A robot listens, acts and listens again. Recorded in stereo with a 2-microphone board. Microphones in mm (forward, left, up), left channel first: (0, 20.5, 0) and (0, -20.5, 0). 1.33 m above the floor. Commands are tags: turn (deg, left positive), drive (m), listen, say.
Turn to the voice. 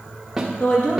<turn deg="50"/>
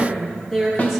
<say>Facing the woman speaking.</say>